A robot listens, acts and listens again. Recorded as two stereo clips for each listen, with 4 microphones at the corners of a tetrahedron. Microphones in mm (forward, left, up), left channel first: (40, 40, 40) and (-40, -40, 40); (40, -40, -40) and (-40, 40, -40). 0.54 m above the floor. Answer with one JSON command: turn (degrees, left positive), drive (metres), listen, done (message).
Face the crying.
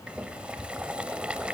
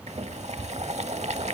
{"listen": true}
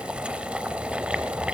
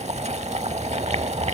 {"listen": true}
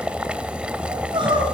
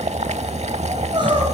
{"turn": 180}
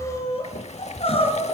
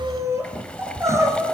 {"turn": 70}
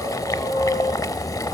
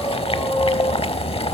{"turn": 25}
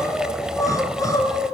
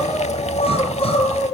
{"turn": -15}
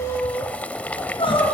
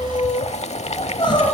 {"done": "Found it: crying, straight ahead."}